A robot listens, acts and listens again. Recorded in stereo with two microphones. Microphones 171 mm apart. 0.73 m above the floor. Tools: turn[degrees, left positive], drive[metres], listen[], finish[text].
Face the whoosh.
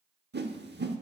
Action: turn[-90]
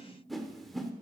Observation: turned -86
Action: finish[Facing the whoosh.]